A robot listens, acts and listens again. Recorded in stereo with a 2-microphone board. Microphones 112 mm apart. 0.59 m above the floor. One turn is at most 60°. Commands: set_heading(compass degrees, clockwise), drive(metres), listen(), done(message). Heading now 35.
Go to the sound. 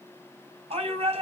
set_heading(95)
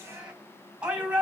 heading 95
set_heading(105)
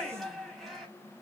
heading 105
drive(1.0)
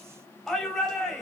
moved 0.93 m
drive(1.0)
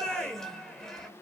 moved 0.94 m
drive(1.0)
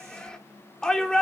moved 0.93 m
set_heading(95)
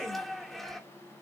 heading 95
drive(1.0)
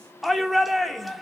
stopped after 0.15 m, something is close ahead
done("I am next to the shout.")